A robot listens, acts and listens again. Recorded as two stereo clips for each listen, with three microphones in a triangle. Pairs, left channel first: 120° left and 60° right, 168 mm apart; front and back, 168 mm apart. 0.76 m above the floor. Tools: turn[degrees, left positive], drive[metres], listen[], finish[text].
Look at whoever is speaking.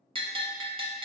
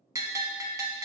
Action: listen[]
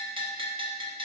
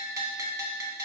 Action: listen[]
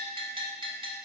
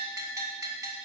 Action: finish[I can't make out anyone speaking to turn to.]